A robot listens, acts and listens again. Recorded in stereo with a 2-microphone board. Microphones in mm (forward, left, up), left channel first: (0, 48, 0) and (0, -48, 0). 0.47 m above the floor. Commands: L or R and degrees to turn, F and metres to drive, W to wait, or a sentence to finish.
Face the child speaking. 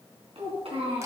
R90
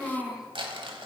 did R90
Found it: a child speaking, straight ahead, 2 to 4 m away.